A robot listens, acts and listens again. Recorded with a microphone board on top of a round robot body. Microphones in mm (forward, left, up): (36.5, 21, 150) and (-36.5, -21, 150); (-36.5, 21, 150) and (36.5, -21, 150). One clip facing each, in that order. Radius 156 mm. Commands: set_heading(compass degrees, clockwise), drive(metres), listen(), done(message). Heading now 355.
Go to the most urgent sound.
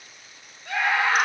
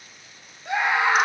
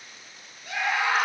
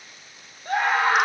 set_heading(75)
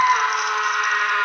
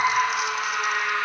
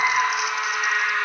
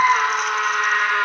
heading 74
drive(1.0)
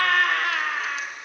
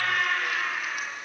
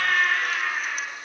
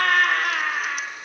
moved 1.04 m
drive(1.0)
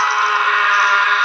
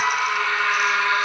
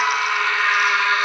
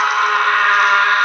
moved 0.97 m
set_heading(64)
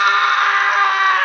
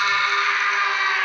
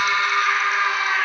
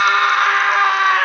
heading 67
drive(1.0)
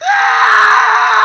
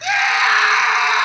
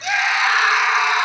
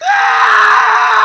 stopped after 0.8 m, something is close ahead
done("Arrived at the scream, straight ahead.")